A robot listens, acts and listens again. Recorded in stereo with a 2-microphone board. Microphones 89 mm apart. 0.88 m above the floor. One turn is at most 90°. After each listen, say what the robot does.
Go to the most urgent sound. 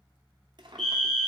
Turn 30° left.
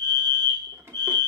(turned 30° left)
Turn 90° left.
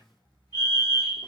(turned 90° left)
Turn 60° left.
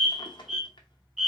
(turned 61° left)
Drive 1.0 m forward.
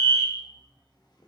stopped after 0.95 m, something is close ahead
Turn 10° right.
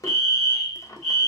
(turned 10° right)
Arrived at the fire alarm, straight ahead.